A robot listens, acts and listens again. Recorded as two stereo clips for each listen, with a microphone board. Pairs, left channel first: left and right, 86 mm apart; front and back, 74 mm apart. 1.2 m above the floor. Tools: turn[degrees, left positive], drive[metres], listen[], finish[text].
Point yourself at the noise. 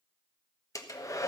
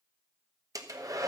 Thought: The hair dryer: 140° left.
Action: turn[140]
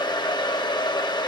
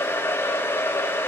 Thought: The hair dryer is now 60° left.
Action: turn[60]
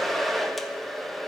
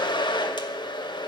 Action: finish[Facing the hair dryer.]